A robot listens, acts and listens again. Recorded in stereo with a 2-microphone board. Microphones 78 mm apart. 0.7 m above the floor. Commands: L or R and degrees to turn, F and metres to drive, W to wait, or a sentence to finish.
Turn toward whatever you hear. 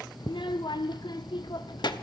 L70
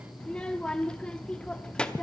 L15
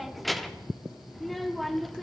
Facing the child speaking.